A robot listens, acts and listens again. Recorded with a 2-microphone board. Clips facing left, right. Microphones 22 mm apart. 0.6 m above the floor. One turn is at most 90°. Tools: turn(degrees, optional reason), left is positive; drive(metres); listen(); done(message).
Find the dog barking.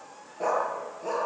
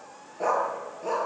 turn(degrees=-30)
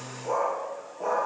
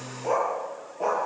turn(degrees=-90, reason="So it is at 145° right.")
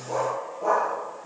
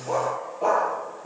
turn(degrees=-45, reason="The dog barking is now 45° right.")
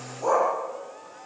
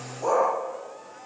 done("Found it: a dog barking, straight ahead, over 4 m away.")